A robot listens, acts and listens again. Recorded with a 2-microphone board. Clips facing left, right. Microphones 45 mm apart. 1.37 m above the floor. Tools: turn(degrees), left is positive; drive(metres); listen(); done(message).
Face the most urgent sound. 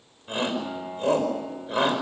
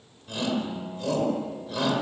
turn(degrees=35)
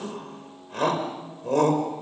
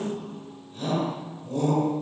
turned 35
turn(degrees=110)
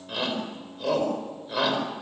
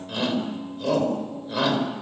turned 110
done("Found it: a shout, straight ahead.")